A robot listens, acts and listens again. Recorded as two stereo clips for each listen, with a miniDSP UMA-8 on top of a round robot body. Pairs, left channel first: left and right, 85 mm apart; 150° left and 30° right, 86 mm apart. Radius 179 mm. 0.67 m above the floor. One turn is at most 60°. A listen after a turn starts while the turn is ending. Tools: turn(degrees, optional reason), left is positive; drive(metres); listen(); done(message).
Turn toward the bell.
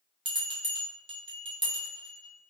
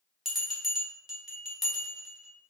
turn(degrees=-60, reason="The bell: 115° right.")
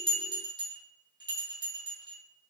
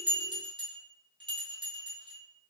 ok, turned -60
turn(degrees=-55, reason="The bell is now 55° right.")
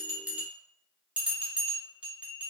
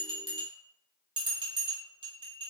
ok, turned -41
turn(degrees=-10, reason="The bell is now 10° right.")
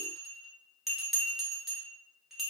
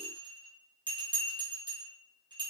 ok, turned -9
done("Found it: a bell, straight ahead.")